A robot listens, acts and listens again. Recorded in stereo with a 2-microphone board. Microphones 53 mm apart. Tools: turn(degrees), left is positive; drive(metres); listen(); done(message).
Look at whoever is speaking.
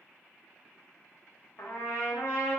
listen()
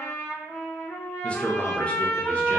turn(degrees=20)
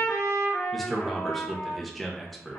done("Facing the man speaking.")